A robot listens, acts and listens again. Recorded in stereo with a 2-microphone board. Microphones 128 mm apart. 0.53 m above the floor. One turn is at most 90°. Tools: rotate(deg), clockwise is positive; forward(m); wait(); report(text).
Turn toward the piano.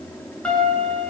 rotate(-30)
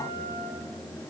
wait()
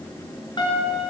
rotate(-90)
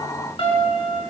rotate(-50)
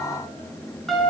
report("Facing the piano.")